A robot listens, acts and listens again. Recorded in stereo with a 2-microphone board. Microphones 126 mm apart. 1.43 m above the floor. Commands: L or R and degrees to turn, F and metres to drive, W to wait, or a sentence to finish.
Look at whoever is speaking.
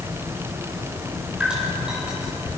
W
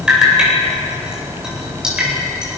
W
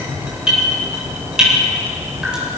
I can't make out anyone speaking, only dripping.